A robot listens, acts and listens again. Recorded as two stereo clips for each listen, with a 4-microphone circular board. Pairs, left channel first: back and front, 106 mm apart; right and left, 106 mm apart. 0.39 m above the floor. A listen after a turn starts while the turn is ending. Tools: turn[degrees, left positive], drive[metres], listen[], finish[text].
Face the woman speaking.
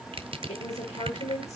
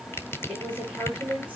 Thought: The woman speaking: 170° left.
Action: turn[170]
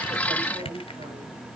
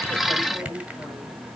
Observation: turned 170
Action: finish[Found it: a woman speaking, straight ahead.]